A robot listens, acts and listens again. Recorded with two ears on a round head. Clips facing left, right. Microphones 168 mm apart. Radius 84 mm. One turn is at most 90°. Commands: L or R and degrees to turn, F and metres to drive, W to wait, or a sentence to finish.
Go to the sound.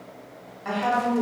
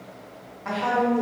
L20
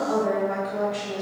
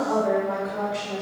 L90
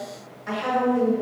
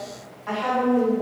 L25
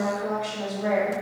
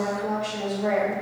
R10
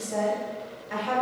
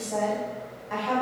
F1.0
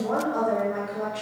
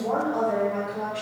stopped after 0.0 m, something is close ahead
Something is in my way. I am facing the woman speaking but have not reached it.